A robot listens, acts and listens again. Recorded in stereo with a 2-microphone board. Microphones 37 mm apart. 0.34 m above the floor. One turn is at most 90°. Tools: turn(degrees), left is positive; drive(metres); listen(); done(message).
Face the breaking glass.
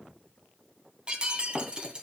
turn(degrees=-25)
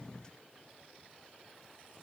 listen()
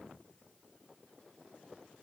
done("I heard breaking glass, but can't make it out now. It was about straight ahead or 130° right.")